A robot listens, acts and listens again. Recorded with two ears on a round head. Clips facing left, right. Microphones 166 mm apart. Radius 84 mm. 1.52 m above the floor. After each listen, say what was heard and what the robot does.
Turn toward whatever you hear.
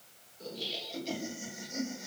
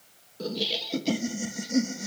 The laughter: about 65° right or 115° right. Turn 65° right.
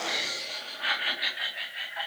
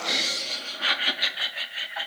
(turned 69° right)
So it is at 55° right. Turn 55° right.
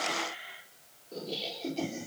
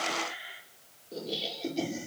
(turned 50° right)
The laughter is now 10° right. Turn 10° right.
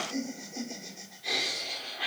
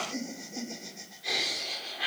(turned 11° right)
Facing the laughter, over 4 m away.